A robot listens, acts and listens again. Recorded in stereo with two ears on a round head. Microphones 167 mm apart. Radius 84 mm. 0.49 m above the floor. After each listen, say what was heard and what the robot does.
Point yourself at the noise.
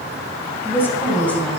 Turn 30° left.
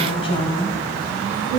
So it is at 155° left. Turn 155° left.
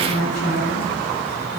The woman speaking is now 50° left. Turn 50° left.
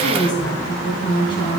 The woman speaking is now 25° left. Turn 25° left.
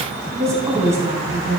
The woman speaking is now 15° right. Turn 15° right.
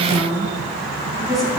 Found it: a woman speaking, straight ahead.